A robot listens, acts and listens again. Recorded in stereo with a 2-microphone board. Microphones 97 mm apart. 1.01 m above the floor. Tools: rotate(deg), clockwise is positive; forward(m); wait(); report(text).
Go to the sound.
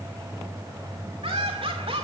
rotate(90)
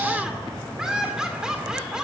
forward(1.0)
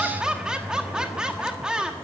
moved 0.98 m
rotate(10)
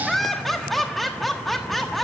forward(1.0)
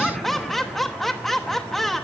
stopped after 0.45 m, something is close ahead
report("I am next to the laughter.")